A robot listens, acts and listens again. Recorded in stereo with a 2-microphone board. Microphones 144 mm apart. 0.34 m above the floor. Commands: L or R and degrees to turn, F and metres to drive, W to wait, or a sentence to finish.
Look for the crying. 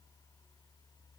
W
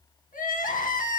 L70
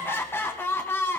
L15
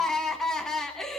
Found it: crying, straight ahead.